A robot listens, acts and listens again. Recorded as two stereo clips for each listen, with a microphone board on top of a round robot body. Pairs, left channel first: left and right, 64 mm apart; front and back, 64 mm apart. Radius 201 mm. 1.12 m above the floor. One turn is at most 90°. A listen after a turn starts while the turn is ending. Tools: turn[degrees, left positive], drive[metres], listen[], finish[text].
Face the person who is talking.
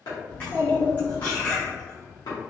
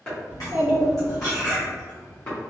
Thought: The child speaking: 105° left.
Action: turn[90]
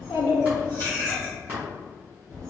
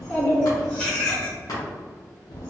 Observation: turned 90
Action: finish[Facing the child speaking.]